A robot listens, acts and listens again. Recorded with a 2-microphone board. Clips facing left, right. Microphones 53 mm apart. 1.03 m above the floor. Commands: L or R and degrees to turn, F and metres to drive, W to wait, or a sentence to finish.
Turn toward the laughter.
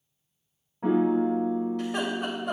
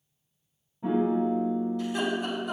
L70
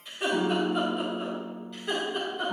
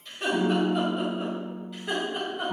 R10
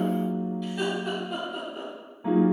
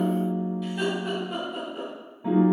R10
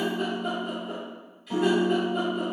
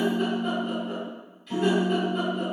W
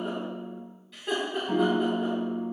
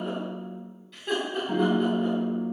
Facing the laughter, over 4 m away.